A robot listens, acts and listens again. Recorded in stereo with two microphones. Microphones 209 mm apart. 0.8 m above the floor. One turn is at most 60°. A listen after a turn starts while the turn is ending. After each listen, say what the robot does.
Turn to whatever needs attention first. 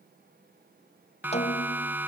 Turn 30° right.
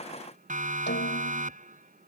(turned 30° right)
Turn 60° right.
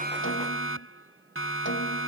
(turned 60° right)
Turn 60° right.
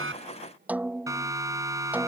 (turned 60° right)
Turn 15° right.
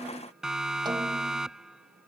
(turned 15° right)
Facing the siren.